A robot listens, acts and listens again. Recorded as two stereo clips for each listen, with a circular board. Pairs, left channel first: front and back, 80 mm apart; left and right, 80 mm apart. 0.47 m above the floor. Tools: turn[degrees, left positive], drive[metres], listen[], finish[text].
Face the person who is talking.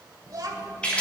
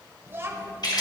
Thought: The child speaking: 145° right.
Action: turn[-145]
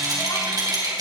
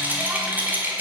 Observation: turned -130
Thought: Nothing new. It was at 15° right.
Action: turn[-15]
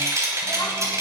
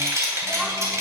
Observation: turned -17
Action: listen[]
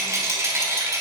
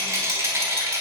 Action: finish[I heard a child speaking from this way, but can't make it out now.]